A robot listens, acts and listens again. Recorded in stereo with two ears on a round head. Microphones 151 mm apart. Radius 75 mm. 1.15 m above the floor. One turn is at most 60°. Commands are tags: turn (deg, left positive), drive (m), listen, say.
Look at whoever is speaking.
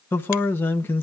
<turn deg="30"/>
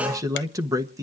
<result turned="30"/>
<turn deg="-20"/>
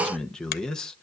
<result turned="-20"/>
<say>Facing the man speaking.</say>